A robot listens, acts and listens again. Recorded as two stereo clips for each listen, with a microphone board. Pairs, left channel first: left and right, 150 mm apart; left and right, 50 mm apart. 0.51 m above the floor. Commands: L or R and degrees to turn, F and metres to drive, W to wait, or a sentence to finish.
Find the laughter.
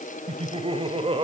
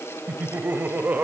R35
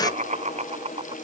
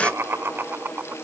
R45
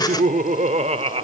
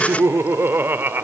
R40
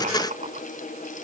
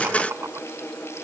R120
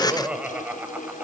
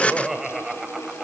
R10
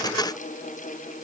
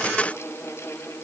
W
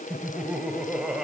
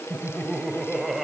Found it: laughter, straight ahead, 2 to 4 m away.